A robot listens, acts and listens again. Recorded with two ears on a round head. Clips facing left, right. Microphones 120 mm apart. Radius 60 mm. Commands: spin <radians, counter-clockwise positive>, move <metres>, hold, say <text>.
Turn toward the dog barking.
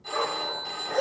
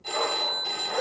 spin 1.13
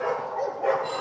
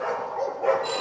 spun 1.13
say Facing the dog barking, 2 to 4 m away.